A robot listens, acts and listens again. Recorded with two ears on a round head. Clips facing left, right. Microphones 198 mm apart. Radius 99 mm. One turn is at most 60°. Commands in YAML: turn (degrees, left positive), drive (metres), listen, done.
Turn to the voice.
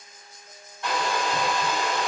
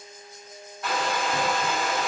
listen: true
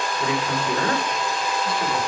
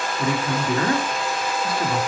turn: -60
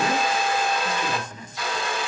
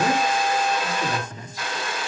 turn: -30
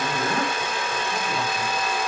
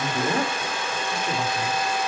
turn: -10
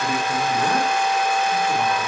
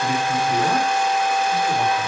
done: "Facing the man speaking."